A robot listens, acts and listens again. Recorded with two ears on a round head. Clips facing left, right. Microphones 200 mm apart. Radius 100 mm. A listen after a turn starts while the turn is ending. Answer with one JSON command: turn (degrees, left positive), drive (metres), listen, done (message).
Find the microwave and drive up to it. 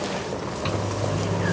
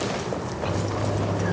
{"turn": 75}
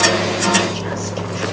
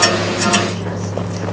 {"drive": 1.0}
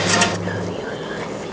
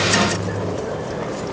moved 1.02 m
{"turn": 15}
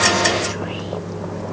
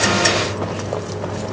{"drive": 1.0}
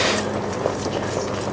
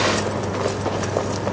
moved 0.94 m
{"listen": true}
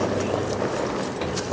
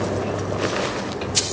{"listen": true}
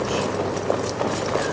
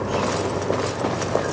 {"done": "Facing where the microwave came from. I can't hear it now. I did not reach it."}